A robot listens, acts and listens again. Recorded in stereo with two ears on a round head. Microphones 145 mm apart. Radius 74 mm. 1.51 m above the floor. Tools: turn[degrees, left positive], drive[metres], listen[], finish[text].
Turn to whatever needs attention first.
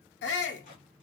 Action: turn[90]
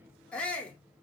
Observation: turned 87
Action: finish[Facing the shout, under 1 m away.]